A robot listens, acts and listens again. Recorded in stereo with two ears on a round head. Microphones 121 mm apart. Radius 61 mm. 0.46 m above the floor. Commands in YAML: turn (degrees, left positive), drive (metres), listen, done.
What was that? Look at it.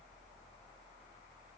listen: true
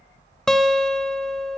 turn: 30
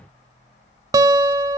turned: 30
turn: -25
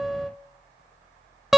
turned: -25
done: "Found it: a guitar, straight ahead."